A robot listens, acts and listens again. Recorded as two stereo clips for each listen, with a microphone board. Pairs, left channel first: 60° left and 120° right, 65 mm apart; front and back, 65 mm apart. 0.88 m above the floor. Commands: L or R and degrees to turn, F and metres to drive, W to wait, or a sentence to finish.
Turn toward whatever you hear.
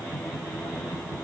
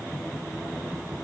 W
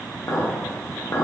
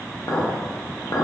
L20
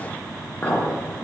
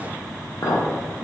Found it: a clink, straight ahead.